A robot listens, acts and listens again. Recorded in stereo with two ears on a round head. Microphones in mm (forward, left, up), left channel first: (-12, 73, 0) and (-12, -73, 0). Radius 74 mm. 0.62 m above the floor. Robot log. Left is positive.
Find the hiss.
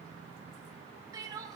cmd idle
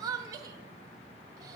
cmd idle
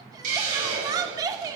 note: The hiss: about 50° right or 130° right.
cmd yaw -50
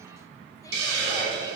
note: So it is at 85° right.
cmd yaw -85
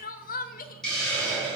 end: Facing the hiss, over 4 m away.